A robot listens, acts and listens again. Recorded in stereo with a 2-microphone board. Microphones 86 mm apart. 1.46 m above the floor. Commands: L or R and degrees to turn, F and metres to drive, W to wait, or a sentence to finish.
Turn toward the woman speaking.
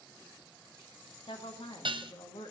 L90
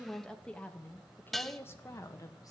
L40
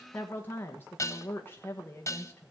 L25
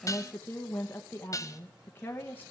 L20
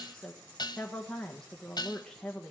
Found it: a woman speaking, straight ahead, 1 to 2 m away.